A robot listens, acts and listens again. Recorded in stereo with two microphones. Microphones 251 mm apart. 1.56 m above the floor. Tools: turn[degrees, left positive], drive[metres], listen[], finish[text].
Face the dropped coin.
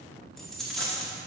Action: turn[30]
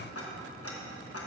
Action: listen[]
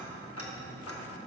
Action: finish[I heard a dropped coin, but can't make it out now. It was about 30° right or 150° left.]